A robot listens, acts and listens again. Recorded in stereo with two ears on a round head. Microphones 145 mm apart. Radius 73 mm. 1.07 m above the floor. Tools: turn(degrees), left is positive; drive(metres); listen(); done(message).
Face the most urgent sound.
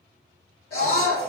turn(degrees=70)
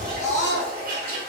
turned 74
turn(degrees=20)
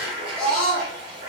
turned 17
done("Found it: a scream, straight ahead.")